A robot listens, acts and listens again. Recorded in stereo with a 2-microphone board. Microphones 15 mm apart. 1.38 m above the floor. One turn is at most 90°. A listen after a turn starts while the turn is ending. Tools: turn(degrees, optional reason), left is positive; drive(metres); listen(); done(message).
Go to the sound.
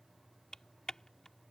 turn(degrees=55, reason="The typing on a keyboard: about 55° left or 125° left.")
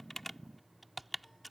drive(metres=1.0)
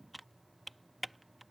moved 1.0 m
drive(metres=1.0)
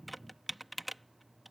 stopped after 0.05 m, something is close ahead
done("Arrived at the typing on a keyboard, straight ahead.")